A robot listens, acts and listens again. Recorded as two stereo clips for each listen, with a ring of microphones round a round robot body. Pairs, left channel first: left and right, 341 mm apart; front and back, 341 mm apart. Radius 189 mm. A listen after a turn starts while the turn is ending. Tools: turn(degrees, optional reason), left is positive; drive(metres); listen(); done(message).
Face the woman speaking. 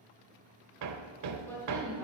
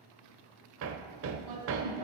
turn(degrees=175, reason="The woman speaking: 175° left.")
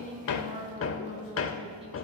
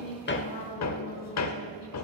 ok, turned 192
turn(degrees=-15, reason="The woman speaking is now 15° right.")
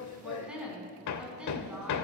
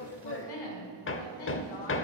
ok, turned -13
done("Found it: a woman speaking, straight ahead, 2 to 4 m away.")